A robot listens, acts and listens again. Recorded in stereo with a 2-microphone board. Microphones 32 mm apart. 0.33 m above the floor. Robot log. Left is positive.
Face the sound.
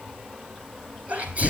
note: The sneeze: about 50° right or 130° right.
cmd yaw -50
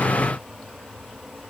cmd idle
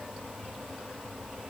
end: I heard a sneeze, but can't make it out now. It was about straight ahead or 80° right.